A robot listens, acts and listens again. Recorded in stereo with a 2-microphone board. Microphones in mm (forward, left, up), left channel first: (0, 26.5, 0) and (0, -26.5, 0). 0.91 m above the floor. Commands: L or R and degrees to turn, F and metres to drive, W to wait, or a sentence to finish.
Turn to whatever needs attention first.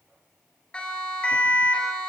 L20
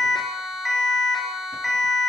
Facing the siren.